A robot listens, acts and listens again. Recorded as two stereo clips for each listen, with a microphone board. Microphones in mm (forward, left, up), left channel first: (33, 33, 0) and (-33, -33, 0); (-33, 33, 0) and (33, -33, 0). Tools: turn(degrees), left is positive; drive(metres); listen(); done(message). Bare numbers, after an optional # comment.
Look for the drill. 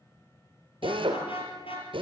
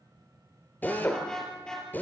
# The drill: 155° right.
turn(-155)
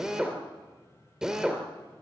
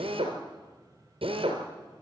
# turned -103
# The drill is now 50° right.
turn(-50)
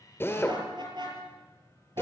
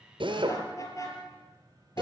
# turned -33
# The drill is now 20° right.
turn(-20)
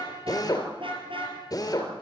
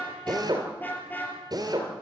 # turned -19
done("Facing the drill, 2 to 4 m away.")